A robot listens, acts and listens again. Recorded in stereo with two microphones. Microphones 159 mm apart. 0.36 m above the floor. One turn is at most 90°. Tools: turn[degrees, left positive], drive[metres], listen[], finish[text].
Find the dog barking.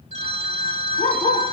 Thought: The dog barking: about 45° left or 135° left.
Action: turn[45]
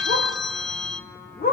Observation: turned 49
Thought: So it is at 75° left.
Action: turn[75]
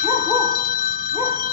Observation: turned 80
Thought: The dog barking is now 20° right.
Action: turn[-20]
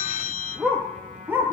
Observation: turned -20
Thought: The dog barking is now 15° right.
Action: turn[-15]
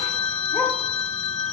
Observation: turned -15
Action: listen[]
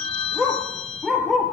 Action: finish[Found it: a dog barking, straight ahead, 2 to 4 m away.]